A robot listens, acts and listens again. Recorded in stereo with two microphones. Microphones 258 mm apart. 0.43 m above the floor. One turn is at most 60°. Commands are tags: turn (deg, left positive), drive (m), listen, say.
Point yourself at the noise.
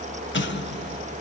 <turn deg="45"/>
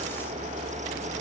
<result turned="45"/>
<listen/>
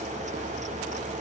<say>I heard an explosion, but can't make it out now. It was about straight ahead or 90° left.</say>